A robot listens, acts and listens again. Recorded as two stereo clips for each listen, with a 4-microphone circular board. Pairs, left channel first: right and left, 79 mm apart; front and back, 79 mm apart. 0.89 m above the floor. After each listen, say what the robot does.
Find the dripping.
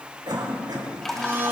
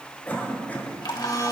Facing the dripping, 1 to 2 m away.